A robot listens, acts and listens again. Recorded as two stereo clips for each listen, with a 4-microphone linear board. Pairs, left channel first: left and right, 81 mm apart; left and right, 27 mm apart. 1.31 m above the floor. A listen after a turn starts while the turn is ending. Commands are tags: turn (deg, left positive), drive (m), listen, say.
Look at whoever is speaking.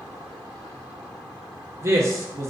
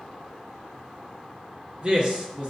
<turn deg="-35"/>
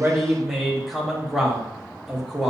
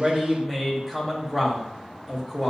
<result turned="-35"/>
<say>Facing the man speaking.</say>